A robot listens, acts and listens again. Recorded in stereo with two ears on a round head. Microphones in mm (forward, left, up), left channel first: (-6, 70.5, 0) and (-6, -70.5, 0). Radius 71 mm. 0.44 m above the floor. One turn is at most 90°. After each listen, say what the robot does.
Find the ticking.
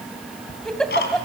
Turn 70° left.
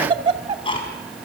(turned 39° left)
Turn 35° left.
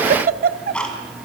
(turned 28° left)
Turn 10° left.
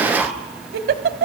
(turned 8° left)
Found it: ticking, straight ahead, 2 to 4 m away.